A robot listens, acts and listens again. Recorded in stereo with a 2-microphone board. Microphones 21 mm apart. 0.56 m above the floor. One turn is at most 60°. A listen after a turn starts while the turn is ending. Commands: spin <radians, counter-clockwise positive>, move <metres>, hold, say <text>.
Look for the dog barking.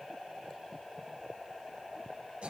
hold
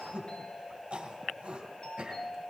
hold
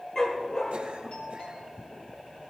spin 0.52
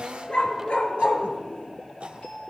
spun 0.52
spin 1.05
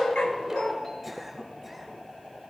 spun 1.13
spin 0.70
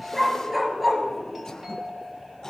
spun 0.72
say Found it: a dog barking, straight ahead.